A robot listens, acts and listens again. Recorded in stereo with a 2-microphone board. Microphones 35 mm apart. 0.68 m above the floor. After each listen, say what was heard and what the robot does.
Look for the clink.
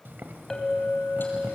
The clink: about 15° left or 165° left. Turn 15° left.
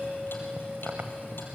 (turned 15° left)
So it is at 150° left. Turn 150° left.
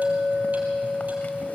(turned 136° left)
The clink is now 10° left. Turn 10° left.
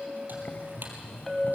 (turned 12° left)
Found it: a clink, straight ahead.